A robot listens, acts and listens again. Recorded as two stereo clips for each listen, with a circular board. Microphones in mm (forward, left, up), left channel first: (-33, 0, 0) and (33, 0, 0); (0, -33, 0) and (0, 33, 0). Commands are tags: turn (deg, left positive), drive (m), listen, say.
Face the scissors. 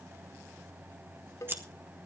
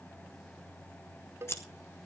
<turn deg="-50"/>
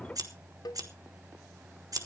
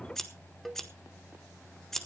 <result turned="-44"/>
<say>Facing the scissors, 1 to 2 m away.</say>